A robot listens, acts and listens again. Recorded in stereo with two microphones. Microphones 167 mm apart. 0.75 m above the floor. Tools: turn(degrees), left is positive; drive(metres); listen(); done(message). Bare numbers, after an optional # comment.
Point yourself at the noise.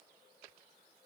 listen()
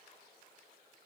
listen()
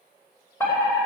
# The fire alarm: about 15° left or 165° left.
turn(15)
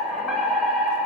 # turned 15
done("Found it: a fire alarm, straight ahead.")